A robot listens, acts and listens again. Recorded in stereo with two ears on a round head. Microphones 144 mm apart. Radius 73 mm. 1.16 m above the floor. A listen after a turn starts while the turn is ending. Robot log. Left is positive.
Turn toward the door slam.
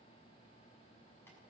cmd idle
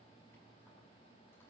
cmd idle
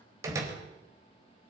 note: The door slam: about 20° right or 160° right.
cmd yaw -20
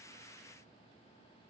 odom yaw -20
cmd idle
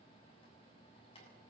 end: I heard a door slam, but can't make it out now. It was about straight ahead or 140° right.